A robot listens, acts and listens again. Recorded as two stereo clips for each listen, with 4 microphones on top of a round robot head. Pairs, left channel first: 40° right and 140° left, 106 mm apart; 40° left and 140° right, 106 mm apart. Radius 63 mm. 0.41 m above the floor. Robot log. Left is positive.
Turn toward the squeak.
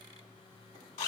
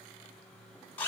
cmd idle
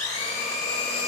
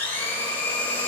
cmd idle
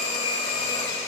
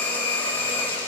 end: I can't make out a squeak to turn to.